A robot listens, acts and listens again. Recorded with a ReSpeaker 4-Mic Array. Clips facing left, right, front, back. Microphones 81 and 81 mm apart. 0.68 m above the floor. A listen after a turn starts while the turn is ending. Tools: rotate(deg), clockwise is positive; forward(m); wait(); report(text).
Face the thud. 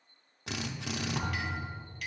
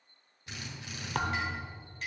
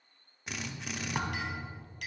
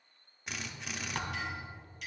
rotate(75)
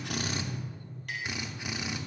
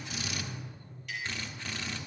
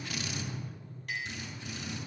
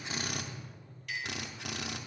report("Facing where the thud came from. I can't hear it now.")